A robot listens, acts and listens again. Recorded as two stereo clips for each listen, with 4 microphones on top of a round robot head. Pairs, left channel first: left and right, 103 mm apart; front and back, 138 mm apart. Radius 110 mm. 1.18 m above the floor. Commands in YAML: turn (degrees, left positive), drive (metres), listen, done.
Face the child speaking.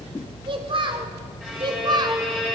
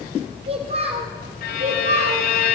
turn: -135
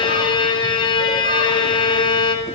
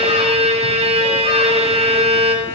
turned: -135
listen: true
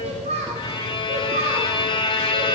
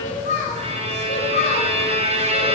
turn: -55
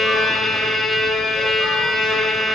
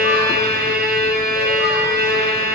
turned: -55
listen: true
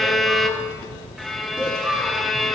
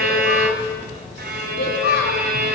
turn: -10
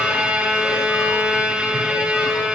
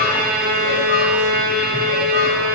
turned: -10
listen: true
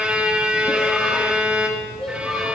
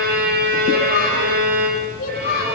done: "Found it: a child speaking, straight ahead, 1 to 2 m away."